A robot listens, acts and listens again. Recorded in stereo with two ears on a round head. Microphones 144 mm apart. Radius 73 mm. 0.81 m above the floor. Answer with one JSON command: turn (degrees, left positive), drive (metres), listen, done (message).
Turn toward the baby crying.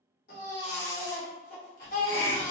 {"turn": 55}
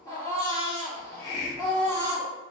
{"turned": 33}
{"turn": 20}
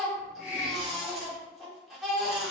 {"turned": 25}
{"done": "Facing the baby crying, 1 to 2 m away."}